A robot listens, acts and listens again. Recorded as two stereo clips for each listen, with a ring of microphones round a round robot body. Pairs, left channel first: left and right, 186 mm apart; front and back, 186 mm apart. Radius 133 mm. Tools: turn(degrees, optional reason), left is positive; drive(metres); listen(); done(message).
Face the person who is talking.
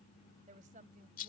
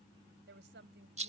turn(degrees=-150, reason="The woman speaking: 150° right.")
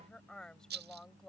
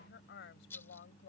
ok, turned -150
done("Facing the woman speaking.")